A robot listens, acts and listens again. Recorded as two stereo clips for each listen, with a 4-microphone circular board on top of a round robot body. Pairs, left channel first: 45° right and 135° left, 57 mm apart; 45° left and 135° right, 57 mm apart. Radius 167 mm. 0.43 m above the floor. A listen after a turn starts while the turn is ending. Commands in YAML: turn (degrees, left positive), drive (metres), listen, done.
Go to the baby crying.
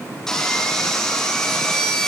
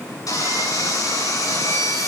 listen: true
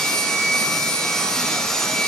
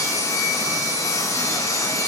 listen: true
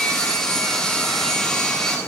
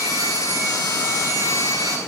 done: "I can't make out a baby crying to turn to."